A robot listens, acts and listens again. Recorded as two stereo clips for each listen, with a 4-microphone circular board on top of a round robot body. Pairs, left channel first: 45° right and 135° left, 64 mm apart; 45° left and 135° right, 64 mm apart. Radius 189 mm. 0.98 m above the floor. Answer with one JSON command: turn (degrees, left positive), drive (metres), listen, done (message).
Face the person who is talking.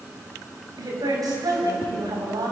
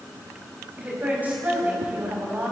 {"turn": 155}
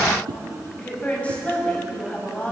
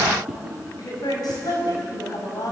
{"turn": 25}
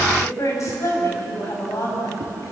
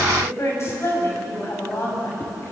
{"done": "Facing the woman speaking."}